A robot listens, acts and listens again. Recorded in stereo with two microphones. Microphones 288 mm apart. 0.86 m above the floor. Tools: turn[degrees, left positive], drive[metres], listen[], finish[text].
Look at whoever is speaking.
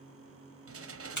Action: listen[]
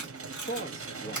Thought: The man speaking: about 40° left or 140° left.
Action: turn[40]
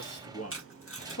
Thought: So it is at 90° left.
Action: turn[90]
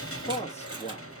Thought: The man speaking is now 25° left.
Action: turn[25]
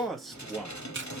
Action: finish[Found it: a man speaking, straight ahead.]